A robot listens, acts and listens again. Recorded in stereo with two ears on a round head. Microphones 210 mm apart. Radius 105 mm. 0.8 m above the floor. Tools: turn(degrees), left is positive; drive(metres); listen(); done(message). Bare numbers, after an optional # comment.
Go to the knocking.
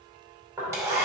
turn(-30)
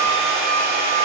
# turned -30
listen()
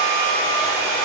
listen()
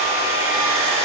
done("I heard knocking, but can't make it out now. It was about 15° left or 135° right. I did not reach it.")